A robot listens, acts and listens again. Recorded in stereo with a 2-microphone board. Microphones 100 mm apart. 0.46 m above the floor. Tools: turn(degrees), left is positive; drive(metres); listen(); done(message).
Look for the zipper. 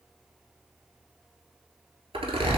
turn(degrees=-70)
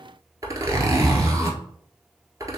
turn(degrees=-35)
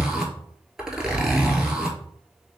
done("Facing the zipper, 1 to 2 m away.")